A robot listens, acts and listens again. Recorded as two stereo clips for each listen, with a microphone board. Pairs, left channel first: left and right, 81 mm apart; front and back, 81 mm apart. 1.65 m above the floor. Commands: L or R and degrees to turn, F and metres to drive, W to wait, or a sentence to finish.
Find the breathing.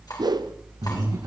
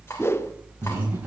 R115
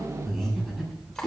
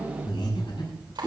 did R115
Found it: breathing, straight ahead.